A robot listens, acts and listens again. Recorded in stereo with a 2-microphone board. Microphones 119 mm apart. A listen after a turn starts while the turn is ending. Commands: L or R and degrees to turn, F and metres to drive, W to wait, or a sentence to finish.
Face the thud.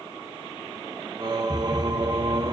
L25
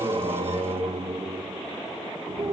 W
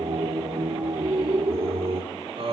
I heard a thud, but can't make it out now. It was about straight ahead or 130° left.